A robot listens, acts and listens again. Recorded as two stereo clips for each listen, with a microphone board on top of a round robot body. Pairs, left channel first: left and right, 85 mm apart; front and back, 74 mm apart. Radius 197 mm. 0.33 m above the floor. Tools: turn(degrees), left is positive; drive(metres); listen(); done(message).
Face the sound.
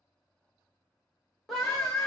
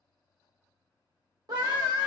turn(degrees=175)
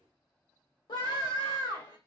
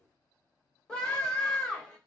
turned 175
turn(degrees=80)
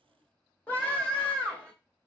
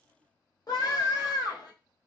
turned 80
turn(degrees=15)
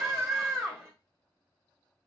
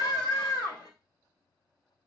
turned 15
done("Facing the scream, 1 to 2 m away.")